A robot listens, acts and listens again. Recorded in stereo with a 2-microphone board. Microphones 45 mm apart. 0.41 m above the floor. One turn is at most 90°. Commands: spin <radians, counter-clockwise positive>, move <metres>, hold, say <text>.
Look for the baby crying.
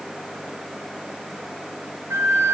hold
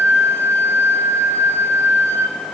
hold
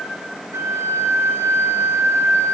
say I can't make out a baby crying to turn to.